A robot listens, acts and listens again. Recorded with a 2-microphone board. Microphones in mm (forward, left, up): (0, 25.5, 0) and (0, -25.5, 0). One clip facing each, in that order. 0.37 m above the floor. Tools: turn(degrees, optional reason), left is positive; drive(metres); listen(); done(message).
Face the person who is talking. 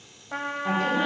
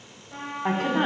turn(degrees=-60, reason="The woman speaking: about 60° right or 120° right.")
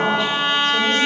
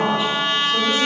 done("Facing the woman speaking, 2 to 4 m away.")